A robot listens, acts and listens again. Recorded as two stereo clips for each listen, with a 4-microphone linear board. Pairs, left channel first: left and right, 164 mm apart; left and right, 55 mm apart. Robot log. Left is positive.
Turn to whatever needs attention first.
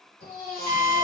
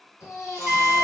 cmd yaw +90
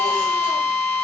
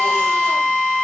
cmd idle
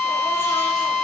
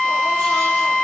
cmd idle
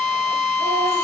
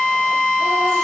end: Facing where the baby crying came from. I can't hear it now.